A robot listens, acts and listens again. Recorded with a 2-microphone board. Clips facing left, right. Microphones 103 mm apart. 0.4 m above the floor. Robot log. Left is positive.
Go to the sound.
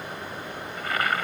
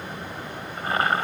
note: The boiling: about 30° right or 150° right.
cmd yaw -30
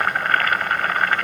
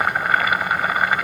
note: So it is at 10° right.
cmd yaw -10
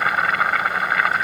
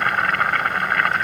cmd fwd 1.0
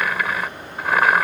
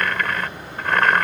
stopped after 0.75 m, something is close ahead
note: The boiling is now 10° left.
cmd yaw +10
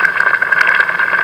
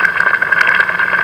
end: I am next to the boiling.